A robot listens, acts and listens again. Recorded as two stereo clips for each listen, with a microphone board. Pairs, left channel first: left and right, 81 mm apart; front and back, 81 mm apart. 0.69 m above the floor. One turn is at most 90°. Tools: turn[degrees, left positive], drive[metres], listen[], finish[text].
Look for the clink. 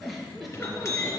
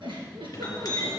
Thought: The clink: 40° left.
Action: turn[40]
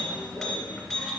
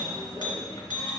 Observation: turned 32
Thought: The clink is now 10° left.
Action: turn[10]
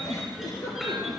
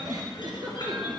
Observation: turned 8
Action: finish[Found it: a clink, straight ahead, 2 to 4 m away.]